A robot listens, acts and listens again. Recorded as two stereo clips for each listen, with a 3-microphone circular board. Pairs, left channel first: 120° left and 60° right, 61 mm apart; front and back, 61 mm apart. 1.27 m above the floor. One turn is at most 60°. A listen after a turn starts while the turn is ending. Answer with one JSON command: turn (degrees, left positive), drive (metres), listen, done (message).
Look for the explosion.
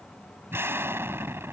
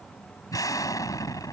{"turn": -15}
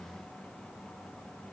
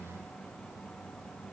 {"done": "Facing where the explosion came from. I can't hear it now."}